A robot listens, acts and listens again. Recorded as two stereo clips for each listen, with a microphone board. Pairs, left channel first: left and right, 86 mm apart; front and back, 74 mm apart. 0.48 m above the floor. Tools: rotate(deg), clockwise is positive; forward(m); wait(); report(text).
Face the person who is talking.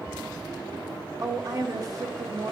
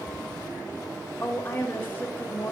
rotate(55)
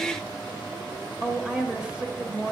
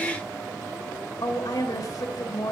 rotate(15)
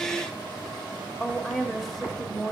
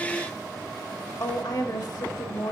report("Found it: a woman speaking, straight ahead, 1 to 2 m away.")